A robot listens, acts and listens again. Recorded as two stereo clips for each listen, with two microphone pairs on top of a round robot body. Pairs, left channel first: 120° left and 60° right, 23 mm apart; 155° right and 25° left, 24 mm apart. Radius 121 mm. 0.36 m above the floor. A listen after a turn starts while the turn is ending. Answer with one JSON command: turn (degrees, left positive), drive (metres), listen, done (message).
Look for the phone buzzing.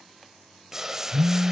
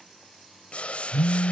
{"turn": -155}
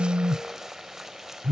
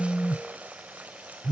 {"turn": -20}
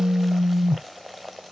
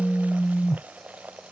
{"done": "Facing the phone buzzing."}